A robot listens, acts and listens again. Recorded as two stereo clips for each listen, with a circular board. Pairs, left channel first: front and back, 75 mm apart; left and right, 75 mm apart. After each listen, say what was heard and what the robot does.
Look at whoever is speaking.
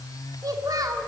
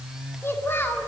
The child speaking: 150° left. Turn 150° left.
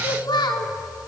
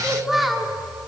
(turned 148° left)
Found it: a child speaking, straight ahead, 2 to 4 m away.